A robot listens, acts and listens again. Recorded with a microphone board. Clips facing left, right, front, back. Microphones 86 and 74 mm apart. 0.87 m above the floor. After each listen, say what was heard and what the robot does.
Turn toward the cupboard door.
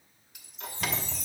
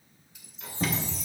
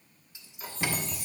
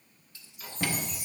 The cupboard door: 125° right. Turn 125° right.
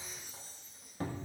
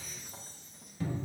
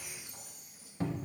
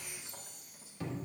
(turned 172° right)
The cupboard door is now 50° left. Turn 50° left.
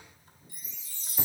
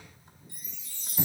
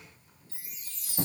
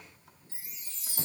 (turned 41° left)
Nothing new. It was at 10° left. Turn 10° left.
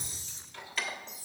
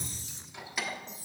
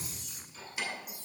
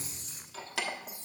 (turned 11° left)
Found it: a cupboard door, straight ahead.